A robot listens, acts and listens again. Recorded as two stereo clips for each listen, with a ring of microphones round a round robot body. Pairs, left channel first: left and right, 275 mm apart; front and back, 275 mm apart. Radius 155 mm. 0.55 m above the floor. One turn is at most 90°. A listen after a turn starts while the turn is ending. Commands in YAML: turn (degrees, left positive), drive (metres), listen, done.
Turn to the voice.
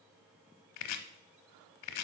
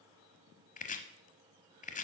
listen: true
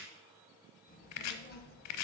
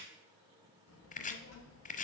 turn: 40
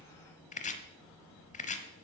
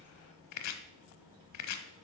turn: 15
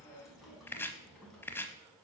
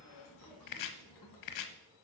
done: "Facing the child speaking, over 4 m away."